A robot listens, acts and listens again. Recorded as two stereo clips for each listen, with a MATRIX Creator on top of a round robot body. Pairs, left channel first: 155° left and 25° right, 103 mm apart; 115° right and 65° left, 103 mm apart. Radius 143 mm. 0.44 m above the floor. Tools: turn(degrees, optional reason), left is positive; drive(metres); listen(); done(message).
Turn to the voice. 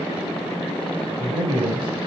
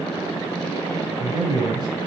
turn(degrees=15, reason="The man speaking: 15° left.")
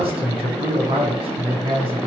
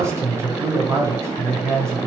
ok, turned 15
done("Facing the man speaking.")